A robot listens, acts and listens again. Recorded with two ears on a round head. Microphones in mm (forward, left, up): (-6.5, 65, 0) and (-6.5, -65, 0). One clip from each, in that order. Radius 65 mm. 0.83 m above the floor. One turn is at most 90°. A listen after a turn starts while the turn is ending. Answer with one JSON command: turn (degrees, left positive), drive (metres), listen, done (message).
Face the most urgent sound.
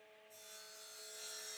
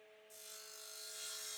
{"listen": true}
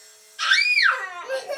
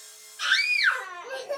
{"turn": 60}
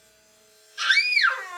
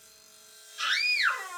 {"turn": 50}
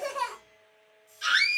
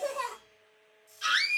{"done": "Found it: a scream, straight ahead, 1 to 2 m away."}